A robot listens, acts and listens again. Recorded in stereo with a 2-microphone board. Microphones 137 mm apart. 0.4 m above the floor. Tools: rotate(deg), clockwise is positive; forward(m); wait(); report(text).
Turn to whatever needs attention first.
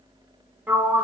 wait()
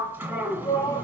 rotate(-25)
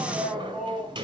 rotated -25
report("Facing the shout.")